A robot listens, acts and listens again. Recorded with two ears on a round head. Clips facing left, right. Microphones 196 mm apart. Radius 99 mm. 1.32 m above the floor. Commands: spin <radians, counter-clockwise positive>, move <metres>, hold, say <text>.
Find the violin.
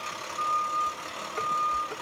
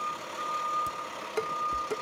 hold
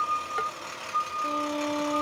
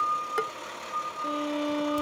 spin -0.52
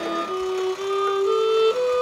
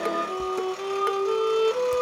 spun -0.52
spin 0.35
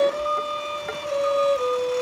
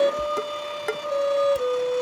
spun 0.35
say Facing the violin.